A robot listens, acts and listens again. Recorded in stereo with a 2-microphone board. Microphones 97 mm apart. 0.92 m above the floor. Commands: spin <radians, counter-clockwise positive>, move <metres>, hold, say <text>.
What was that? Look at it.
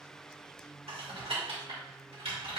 spin -1.57
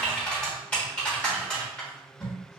spin 0.17
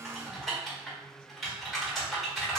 say Facing the typing on a keyboard, 1 to 2 m away.